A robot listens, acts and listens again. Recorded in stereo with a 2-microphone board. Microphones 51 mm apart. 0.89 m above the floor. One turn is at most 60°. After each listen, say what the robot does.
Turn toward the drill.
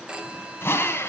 Turn 45° left.
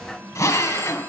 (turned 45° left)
Turn 60° left.
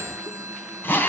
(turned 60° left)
Turn 40° left.
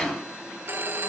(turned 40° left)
Turn 15° left.
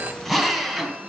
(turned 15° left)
Found it: a drill, straight ahead, 2 to 4 m away.